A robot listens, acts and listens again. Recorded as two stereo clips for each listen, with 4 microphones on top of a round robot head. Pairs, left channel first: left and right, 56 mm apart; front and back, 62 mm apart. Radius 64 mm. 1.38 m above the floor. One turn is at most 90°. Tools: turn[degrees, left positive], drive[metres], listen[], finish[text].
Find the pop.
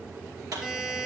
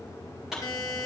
Thought: The pop: 95° right.
Action: turn[-90]
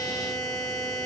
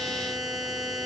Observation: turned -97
Action: finish[Facing where the pop came from. I can't hear it now.]